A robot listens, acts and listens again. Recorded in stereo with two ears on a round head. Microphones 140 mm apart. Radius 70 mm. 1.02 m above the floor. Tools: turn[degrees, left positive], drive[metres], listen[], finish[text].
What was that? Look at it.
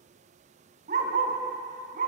Thought: The dog barking: about 55° right or 125° right.
Action: turn[-55]
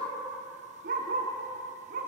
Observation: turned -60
Thought: So it is at 55° right.
Action: turn[-55]
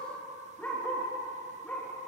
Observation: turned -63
Action: finish[Facing the dog barking, over 4 m away.]